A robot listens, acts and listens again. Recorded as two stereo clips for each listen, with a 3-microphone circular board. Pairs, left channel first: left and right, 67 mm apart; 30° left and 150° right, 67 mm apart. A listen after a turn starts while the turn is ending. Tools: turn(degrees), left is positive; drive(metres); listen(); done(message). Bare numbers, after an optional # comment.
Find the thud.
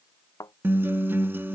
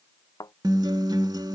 # The thud: 55° left.
turn(55)
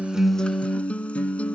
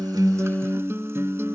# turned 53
done("Facing where the thud came from. I can't hear it now.")